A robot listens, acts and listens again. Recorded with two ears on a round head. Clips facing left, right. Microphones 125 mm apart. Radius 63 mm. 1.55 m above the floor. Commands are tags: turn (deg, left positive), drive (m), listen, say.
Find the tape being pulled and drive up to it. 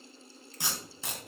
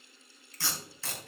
<turn deg="15"/>
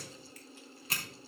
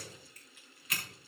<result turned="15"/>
<turn deg="150"/>
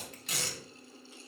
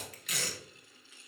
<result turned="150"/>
<turn deg="30"/>
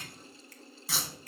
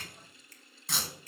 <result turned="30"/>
<drive m="1.0"/>
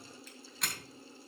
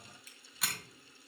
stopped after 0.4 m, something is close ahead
<say>Something is in my way. I am facing the tape being pulled but have not reached it.</say>